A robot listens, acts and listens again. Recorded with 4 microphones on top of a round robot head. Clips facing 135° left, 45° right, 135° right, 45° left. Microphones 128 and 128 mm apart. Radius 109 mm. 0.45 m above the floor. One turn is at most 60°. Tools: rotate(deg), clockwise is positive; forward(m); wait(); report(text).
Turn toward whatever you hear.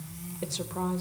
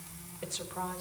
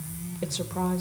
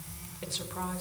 rotate(-60)
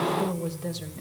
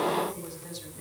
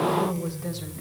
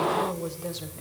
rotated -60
rotate(-60)
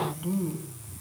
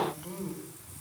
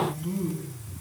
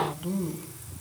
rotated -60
rotate(-60)
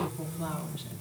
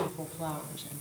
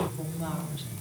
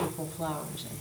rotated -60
report("Facing the woman speaking.")